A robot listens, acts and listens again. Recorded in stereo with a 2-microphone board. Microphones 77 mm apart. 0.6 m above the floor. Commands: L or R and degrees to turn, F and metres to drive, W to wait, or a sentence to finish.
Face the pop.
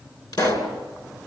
L55
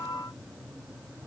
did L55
W
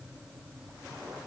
I heard a pop, but can't make it out now. It was about straight ahead or 70° left.